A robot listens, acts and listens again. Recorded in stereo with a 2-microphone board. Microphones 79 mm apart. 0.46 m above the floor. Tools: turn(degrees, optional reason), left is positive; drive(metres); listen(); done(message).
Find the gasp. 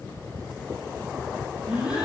turn(degrees=-30)
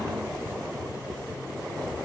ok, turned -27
listen()
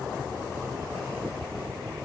done("I heard a gasp, but can't make it out now. It was about 15° left or 140° right.")